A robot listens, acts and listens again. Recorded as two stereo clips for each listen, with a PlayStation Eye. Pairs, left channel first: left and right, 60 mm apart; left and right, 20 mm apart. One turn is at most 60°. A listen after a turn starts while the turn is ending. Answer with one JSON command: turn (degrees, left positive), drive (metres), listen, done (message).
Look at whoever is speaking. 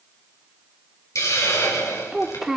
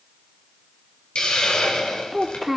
{"turn": -30}
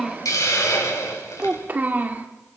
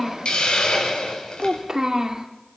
{"turn": -60}
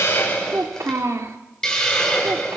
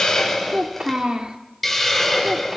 {"turn": -60}
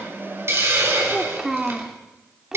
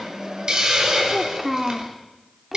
{"turn": -10}
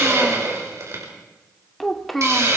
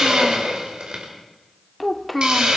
{"done": "Facing the child speaking, 2 to 4 m away."}